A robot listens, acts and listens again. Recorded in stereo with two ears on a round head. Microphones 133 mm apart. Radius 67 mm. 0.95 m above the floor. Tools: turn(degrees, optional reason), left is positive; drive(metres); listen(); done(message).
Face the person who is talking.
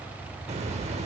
listen()
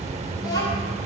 turn(degrees=25, reason="The child speaking: about 25° left or 155° left.")
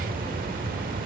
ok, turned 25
listen()
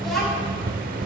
done("Found it: a child speaking, straight ahead.")